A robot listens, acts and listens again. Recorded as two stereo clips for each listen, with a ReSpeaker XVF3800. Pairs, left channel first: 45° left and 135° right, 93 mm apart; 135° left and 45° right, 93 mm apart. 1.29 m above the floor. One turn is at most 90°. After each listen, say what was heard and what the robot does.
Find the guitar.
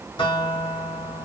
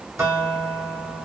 The guitar: 15° left. Turn 15° left.
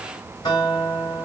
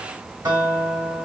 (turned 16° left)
Found it: a guitar, straight ahead, 2 to 4 m away.